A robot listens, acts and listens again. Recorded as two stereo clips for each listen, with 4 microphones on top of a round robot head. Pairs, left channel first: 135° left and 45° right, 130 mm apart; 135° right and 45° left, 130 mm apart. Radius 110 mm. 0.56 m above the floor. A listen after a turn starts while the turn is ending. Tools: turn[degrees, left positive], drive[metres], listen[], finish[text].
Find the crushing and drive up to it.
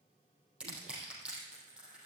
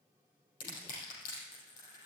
Thought: The crushing: 125° right.
Action: turn[-125]
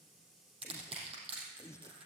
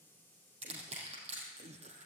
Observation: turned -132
Action: drive[1.0]
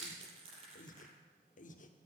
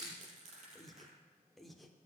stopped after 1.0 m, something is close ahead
Action: finish[Blocked. The crushing is further on, straight ahead.]